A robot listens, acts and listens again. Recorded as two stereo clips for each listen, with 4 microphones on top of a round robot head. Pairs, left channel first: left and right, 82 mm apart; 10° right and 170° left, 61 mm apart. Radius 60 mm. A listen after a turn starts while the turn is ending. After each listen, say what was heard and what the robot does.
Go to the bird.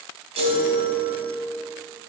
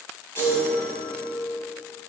Keep listening.
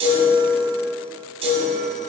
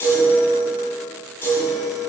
Keep listening.
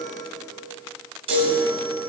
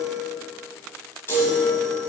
I can't make out a bird to turn to.